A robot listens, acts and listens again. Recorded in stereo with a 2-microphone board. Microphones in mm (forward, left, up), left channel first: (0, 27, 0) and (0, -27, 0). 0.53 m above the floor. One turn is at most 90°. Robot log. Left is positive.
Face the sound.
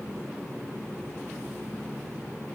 cmd idle
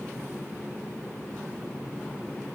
cmd idle
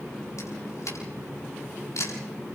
note: The camera shutter: about 65° left or 115° left.
cmd yaw +65
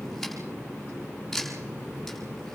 end: Facing the camera shutter.